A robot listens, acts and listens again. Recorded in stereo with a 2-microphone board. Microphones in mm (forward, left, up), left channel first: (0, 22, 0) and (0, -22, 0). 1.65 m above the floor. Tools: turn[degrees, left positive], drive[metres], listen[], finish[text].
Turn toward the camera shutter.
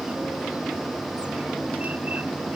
Action: listen[]
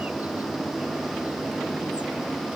Action: listen[]
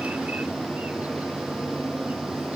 Action: finish[I can't make out a camera shutter.]